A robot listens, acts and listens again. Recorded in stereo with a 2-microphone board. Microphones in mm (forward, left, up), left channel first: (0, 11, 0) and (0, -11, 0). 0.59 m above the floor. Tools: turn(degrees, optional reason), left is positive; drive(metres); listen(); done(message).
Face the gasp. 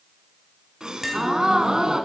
turn(degrees=-35, reason="The gasp: about 35° right or 145° right.")
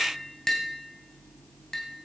listen()
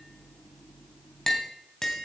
done("I heard a gasp, but can't make it out now. It was about straight ahead or 110° right.")